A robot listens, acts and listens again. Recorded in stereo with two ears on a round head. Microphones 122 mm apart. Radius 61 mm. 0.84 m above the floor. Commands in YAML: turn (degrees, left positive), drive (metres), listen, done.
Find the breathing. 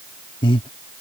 turn: 35
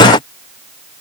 listen: true
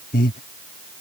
turn: 110
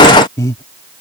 turn: 25
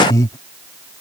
turn: 25
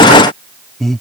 done: "Found it: breathing, straight ahead."